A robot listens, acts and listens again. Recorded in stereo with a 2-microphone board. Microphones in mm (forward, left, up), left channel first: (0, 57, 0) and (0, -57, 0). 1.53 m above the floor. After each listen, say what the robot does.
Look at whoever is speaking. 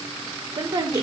Turn 40° right.
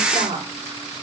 Turn 100° right.
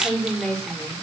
Found it: a woman speaking, straight ahead, 2 to 4 m away.